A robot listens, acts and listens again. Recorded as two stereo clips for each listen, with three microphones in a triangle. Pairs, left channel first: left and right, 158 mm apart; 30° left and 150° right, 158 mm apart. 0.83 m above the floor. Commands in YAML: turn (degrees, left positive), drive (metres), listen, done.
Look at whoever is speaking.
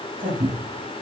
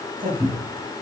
turn: -120
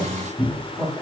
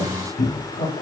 done: "Facing the man speaking, over 4 m away."